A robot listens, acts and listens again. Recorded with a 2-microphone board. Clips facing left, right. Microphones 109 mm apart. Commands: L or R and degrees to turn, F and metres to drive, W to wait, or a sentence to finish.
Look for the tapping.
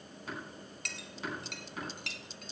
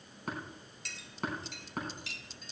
R50
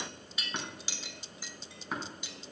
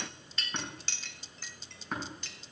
Facing the tapping.